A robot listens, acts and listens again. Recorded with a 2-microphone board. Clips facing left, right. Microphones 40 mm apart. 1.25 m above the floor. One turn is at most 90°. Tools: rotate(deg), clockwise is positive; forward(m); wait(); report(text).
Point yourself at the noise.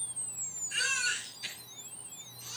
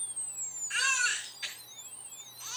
rotate(50)
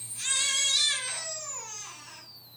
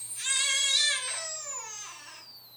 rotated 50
report("Found it: a baby crying, straight ahead, 2 to 4 m away.")